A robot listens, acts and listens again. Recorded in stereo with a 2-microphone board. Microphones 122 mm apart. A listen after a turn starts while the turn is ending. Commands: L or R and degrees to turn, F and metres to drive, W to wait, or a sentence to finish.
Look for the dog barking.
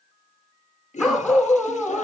R30
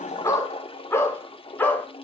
L15
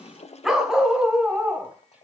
R10
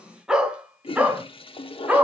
R10
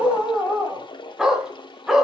Found it: a dog barking, straight ahead, 2 to 4 m away.